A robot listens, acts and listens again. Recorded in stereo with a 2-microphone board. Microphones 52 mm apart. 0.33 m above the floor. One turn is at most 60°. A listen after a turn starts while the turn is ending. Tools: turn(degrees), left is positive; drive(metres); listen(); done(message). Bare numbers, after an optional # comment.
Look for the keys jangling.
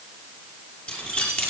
# The keys jangling: about 25° left or 155° left.
turn(25)
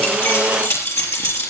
# So it is at 125° left.
turn(60)
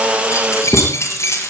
# The keys jangling is now 65° left.
turn(60)
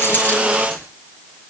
listen()
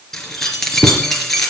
# The keys jangling is now 10° left.
turn(10)
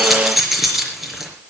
done("Found it: keys jangling, straight ahead, over 4 m away.")